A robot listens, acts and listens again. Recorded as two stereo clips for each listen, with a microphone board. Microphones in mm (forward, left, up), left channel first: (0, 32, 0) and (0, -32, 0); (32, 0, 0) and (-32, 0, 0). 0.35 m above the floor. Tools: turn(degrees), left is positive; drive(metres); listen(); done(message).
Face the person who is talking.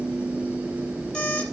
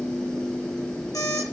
listen()
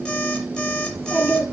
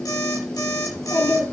turn(degrees=-35)
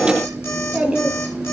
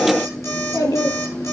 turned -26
turn(degrees=-10)
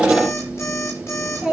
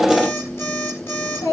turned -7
done("Found it: a child speaking, straight ahead.")